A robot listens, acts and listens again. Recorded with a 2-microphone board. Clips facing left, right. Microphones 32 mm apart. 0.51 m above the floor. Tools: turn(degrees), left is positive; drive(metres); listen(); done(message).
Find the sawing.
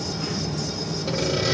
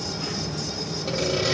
turn(degrees=-30)
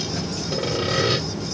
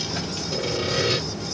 turn(degrees=25)
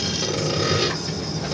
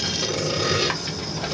done("Facing the sawing, 2 to 4 m away.")